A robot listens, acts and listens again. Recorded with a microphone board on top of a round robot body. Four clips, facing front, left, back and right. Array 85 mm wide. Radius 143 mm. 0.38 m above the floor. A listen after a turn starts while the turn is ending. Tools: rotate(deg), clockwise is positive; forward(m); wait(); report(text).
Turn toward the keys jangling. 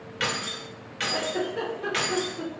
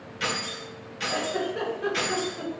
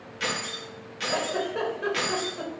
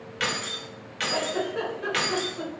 rotate(75)
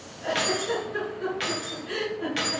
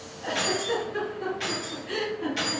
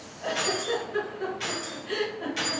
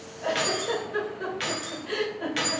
rotate(50)
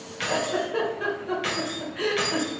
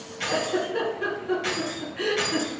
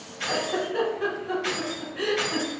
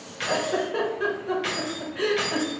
rotate(25)
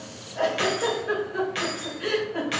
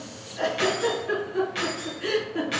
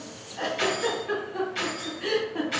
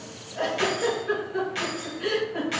report("Facing the keys jangling, 1 to 2 m away.")